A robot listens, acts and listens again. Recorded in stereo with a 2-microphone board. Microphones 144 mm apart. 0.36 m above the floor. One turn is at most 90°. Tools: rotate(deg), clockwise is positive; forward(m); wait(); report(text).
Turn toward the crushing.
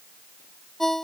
wait()
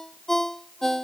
wait()
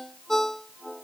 report("I can't make out crushing to turn to.")